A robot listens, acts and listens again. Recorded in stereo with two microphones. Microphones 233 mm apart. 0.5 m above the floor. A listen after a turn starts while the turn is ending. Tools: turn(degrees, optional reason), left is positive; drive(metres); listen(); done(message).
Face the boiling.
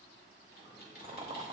turn(degrees=-20, reason="The boiling: about 20° right or 160° right.")
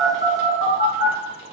listen()
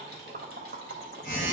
turn(degrees=-140, reason="So it is at 140° right.")
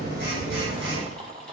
turn(degrees=-25, reason="The boiling is now 25° right.")
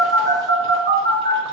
listen()
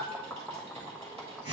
done("Facing the boiling, under 1 m away.")